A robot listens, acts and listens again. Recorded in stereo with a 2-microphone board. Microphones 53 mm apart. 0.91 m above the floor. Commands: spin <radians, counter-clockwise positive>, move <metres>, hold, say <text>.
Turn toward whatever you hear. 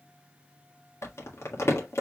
spin 1.05
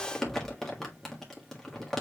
say Found it: crumpling, straight ahead, 1 to 2 m away.